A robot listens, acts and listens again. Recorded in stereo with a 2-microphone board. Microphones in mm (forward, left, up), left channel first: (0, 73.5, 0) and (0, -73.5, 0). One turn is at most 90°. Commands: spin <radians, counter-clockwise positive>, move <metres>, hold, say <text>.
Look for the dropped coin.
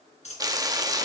spin 0.87
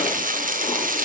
hold
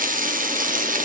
say I heard a dropped coin, but can't make it out now. It was about straight ahead or 80° left.